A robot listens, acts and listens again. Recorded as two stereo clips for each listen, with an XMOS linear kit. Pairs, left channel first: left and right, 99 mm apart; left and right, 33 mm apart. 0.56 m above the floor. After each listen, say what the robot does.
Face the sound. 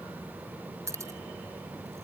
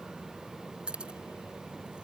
Turn 30° right.
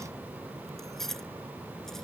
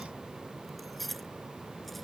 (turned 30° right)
Found it: keys jangling, straight ahead.